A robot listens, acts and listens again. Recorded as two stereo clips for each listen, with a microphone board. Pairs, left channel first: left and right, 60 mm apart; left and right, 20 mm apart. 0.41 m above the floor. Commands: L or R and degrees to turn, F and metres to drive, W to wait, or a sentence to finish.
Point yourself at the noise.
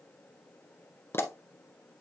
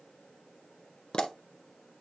L45
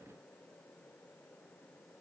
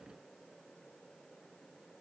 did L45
W
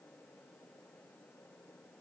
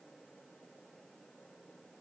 I heard a pop, but can't make it out now. It was about straight ahead or 90° left.